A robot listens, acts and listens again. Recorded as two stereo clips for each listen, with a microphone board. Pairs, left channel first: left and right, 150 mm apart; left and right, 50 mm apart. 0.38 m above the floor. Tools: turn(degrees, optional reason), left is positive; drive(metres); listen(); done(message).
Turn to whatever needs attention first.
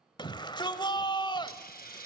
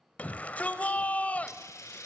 turn(degrees=30, reason="The shout: about 30° left or 150° left.")
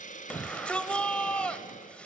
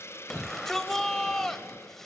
turn(degrees=10, reason="So it is at 10° left.")
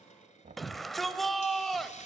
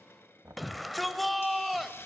done("Found it: a shout, straight ahead.")